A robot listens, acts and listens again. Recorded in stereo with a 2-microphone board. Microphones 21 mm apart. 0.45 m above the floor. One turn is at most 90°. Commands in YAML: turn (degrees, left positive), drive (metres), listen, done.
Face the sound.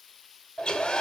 turn: 60
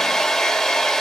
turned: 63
turn: 45
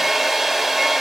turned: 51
done: "Facing the hair dryer."